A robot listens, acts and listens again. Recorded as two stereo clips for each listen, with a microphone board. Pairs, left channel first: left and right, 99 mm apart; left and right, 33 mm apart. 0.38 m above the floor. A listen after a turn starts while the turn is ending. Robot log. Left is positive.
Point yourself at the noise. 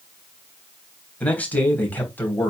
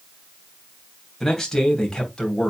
note: The man speaking: about 20° left or 160° left.
cmd yaw +20
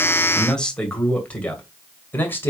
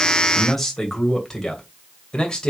note: The man speaking: about 25° left or 155° left.
cmd yaw +25
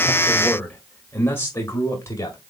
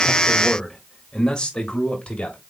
note: The man speaking: about 30° left or 150° left.
cmd yaw +30
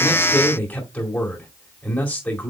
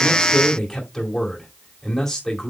cmd yaw +30
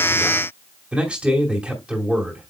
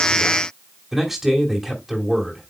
note: So it is at 10° right.
cmd yaw -10
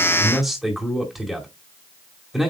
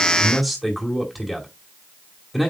end: Facing the man speaking, 2 to 4 m away.